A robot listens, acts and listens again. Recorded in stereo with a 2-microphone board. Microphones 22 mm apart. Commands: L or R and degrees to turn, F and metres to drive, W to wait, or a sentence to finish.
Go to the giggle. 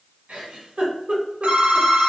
R65
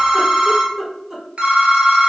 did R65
R25
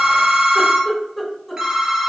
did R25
F1.0
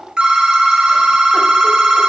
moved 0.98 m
W
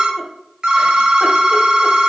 W
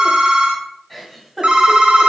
F1.0
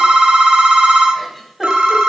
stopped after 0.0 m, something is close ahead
W
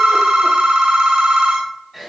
I am next to the giggle.